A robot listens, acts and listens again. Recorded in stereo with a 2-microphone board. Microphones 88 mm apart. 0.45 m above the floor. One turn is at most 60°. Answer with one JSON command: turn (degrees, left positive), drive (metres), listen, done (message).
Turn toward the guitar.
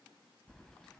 {"listen": true}
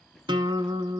{"turn": -60}
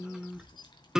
{"turn": -10}
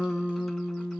{"done": "Facing the guitar, under 1 m away."}